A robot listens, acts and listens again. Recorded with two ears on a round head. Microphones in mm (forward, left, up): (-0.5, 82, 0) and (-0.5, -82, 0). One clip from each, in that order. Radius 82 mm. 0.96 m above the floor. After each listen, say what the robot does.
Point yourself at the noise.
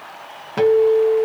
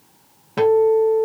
Turn 30° left.
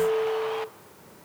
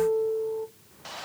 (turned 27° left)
Turn 15° right.
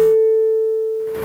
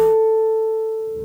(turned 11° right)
Facing the guitar.